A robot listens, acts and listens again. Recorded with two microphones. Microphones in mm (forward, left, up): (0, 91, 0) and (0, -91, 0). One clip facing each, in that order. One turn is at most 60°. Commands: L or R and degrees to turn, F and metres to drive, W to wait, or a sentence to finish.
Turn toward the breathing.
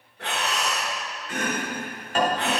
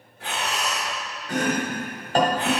L60
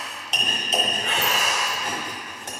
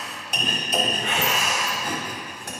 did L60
L35
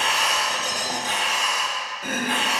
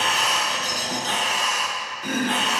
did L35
L10
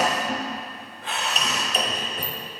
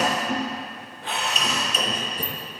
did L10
Facing the breathing.